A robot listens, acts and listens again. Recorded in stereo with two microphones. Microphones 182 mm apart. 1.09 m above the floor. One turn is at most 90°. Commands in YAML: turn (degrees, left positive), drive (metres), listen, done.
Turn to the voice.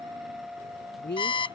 turn: 90
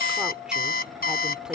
listen: true
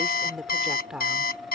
done: "Facing the woman speaking."